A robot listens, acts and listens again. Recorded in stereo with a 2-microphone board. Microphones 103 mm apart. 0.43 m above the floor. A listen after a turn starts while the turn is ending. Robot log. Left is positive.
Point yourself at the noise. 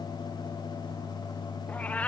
cmd yaw +30
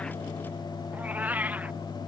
note: So it is at 15° right.
cmd yaw -15
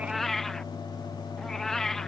end: Found it: a cat meowing, straight ahead.